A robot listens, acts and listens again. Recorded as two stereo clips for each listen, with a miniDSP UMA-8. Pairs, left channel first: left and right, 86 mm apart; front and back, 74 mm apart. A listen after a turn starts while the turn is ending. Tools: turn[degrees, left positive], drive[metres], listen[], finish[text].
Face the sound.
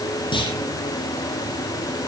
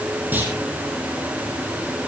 Thought: The clunk: 115° left.
Action: turn[115]
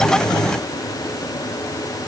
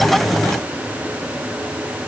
Action: finish[I heard a clunk from this way, but can't make it out now.]